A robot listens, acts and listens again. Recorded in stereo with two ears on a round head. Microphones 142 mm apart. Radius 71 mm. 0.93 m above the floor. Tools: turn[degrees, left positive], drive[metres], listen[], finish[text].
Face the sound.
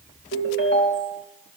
Thought: The ringtone: about 75° left or 105° left.
Action: turn[75]
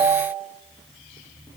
Action: finish[Found it: a ringtone, straight ahead.]